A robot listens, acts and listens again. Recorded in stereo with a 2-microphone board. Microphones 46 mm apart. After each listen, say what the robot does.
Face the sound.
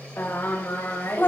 Turn 55° left.
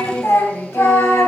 Turn 65° left.
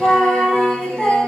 Turn 15° left.
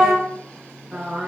Found it: singing, straight ahead, over 4 m away.